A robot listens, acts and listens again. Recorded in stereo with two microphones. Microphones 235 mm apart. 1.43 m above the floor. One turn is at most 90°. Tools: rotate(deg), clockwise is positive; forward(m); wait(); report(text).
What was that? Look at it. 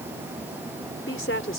rotate(-60)
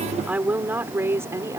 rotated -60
rotate(15)
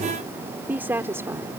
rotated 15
rotate(10)
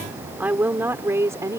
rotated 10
rotate(15)
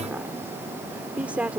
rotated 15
report("Found it: a woman speaking, straight ahead.")